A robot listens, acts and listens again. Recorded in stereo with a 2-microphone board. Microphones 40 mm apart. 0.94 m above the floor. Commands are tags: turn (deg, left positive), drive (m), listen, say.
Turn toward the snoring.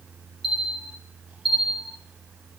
<listen/>
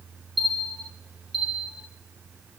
<listen/>
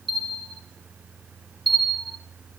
<say>I can't make out snoring, only a bell.</say>